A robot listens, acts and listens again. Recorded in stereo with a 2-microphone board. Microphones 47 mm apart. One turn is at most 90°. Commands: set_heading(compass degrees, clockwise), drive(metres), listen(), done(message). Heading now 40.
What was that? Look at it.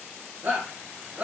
set_heading(80)
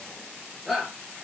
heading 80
done("Facing the shout.")